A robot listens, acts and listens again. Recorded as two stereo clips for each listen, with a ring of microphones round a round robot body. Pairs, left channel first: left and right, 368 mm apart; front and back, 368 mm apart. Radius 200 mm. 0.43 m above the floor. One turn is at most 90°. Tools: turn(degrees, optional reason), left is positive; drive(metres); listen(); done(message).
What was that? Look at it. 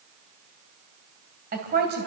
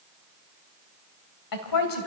turn(degrees=-25, reason="The woman speaking: 25° right.")
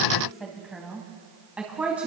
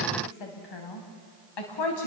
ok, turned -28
done("Found it: a woman speaking, straight ahead, 2 to 4 m away.")